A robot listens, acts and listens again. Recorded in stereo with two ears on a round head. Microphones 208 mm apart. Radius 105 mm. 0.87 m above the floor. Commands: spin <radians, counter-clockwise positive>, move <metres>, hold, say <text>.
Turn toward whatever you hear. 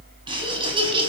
spin -0.44
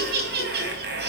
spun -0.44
spin -2.27
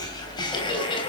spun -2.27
spin 0.44
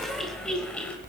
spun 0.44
say Found it: laughter, straight ahead.